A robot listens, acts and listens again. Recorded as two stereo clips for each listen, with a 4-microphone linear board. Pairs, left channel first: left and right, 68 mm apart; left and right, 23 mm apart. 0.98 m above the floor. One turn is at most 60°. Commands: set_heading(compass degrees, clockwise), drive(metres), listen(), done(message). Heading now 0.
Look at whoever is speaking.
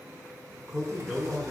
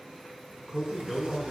set_heading(30)
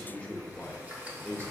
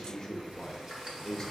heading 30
set_heading(5)
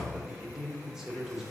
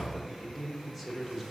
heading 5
done("Found it: a man speaking, straight ahead, under 1 m away.")